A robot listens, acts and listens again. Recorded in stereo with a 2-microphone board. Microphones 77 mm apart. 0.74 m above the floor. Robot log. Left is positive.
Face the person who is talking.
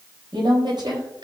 note: The woman speaking: about 70° right or 110° right.
cmd yaw -70
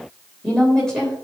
note: So it is at 10° left.
cmd yaw +10
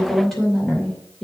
end: Found it: a woman speaking, straight ahead, 2 to 4 m away.